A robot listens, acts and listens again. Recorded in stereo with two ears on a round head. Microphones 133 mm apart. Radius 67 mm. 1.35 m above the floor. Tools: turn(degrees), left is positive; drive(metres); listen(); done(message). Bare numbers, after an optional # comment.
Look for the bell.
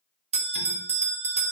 # The bell: about 45° right or 135° right.
turn(-45)
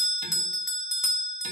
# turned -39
done("Facing the bell.")